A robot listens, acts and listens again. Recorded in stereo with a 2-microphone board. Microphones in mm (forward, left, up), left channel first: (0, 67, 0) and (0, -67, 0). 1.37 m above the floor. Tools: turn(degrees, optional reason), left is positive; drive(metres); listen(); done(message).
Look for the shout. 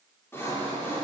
listen()
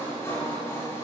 listen()
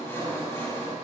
done("I can't make out a shout to turn to.")